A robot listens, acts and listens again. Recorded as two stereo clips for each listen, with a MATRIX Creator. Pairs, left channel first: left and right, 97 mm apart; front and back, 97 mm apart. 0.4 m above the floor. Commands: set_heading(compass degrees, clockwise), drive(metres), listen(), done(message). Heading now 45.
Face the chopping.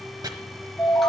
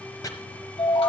set_heading(95)
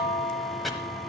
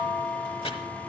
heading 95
done("Facing the chopping.")